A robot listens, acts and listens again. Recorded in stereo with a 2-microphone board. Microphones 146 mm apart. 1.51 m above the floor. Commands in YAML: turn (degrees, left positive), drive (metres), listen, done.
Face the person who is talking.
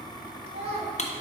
turn: -40
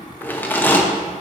listen: true
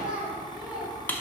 done: "Found it: a child speaking, straight ahead."